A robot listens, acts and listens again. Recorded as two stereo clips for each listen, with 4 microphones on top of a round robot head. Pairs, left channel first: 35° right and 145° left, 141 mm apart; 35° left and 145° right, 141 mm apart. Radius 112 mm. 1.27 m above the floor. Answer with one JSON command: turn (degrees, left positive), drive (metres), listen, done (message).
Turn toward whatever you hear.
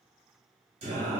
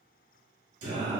{"turn": -175}
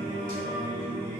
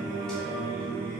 {"turn": -55}
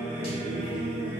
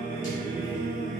{"done": "Found it: singing, straight ahead."}